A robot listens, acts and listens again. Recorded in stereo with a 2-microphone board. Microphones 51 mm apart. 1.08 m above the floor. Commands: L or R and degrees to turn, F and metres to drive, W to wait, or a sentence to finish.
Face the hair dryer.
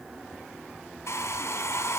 L90
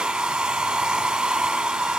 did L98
R15
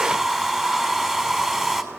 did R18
Facing the hair dryer.